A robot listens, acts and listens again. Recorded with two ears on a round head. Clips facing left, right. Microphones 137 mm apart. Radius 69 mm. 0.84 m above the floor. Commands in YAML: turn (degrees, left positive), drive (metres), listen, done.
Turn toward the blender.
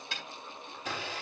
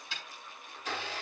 turn: 70
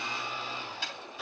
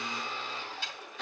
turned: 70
done: "Found it: a blender, straight ahead, over 4 m away."